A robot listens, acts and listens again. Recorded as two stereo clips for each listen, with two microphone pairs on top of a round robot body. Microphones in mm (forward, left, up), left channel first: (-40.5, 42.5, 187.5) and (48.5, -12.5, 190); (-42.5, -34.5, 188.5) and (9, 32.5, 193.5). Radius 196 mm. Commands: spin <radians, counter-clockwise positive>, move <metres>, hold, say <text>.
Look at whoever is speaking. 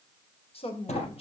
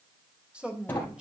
spin 2.27
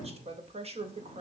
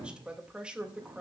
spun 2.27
spin -0.44
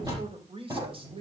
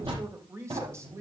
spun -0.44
say Facing the woman speaking, 2 to 4 m away.